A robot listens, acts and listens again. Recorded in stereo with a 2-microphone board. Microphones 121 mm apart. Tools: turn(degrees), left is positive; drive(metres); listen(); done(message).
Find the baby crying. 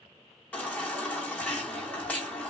turn(degrees=30)
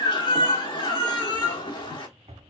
turn(degrees=135)
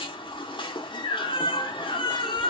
turn(degrees=45)
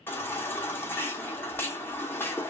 turn(degrees=20)
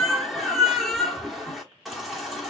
done("Found it: a baby crying, straight ahead.")